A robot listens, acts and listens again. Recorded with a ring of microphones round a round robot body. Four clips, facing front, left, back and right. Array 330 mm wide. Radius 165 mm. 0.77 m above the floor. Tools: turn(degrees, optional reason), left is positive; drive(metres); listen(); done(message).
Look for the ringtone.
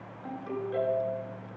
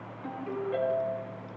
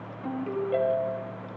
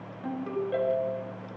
turn(degrees=-145, reason="The ringtone: 145° right.")
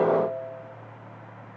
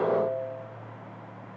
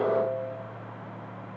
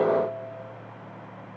turn(degrees=-40, reason="The ringtone is now 40° right.")
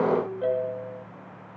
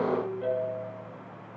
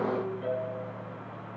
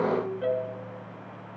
turn(degrees=-20, reason="The ringtone is now 20° right.")
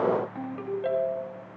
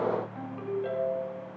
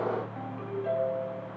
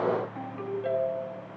done("Facing the ringtone.")